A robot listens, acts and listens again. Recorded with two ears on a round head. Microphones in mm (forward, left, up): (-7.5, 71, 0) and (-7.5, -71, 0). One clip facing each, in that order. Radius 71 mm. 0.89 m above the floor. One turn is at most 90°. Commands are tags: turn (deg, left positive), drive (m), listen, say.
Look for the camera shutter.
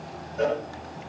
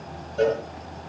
<listen/>
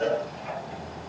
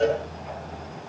<listen/>
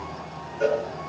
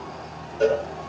<say>I can't make out a camera shutter to turn to.</say>